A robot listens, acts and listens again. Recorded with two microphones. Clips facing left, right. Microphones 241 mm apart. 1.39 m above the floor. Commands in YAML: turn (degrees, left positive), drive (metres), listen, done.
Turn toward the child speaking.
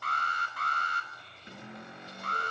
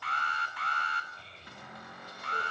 turn: -25
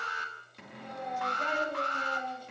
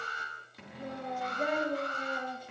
turn: -140
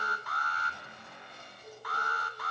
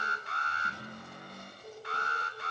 done: "Facing the child speaking."